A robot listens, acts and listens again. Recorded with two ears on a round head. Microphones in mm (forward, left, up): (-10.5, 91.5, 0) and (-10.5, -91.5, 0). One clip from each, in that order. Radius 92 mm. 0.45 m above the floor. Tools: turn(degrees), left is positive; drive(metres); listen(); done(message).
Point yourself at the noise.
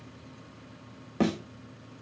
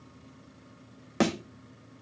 turn(degrees=-60)
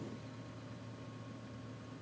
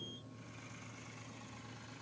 listen()
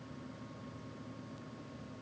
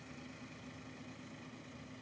done("I heard a thud, but can't make it out now. It was about straight ahead or 60° right.")